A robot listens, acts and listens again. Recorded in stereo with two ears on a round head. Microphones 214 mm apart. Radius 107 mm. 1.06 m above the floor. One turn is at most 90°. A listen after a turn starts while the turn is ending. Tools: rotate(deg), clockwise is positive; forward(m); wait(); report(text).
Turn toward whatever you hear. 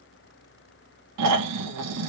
rotate(90)
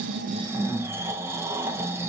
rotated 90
rotate(10)
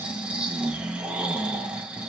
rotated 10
report("Found it: snoring, straight ahead.")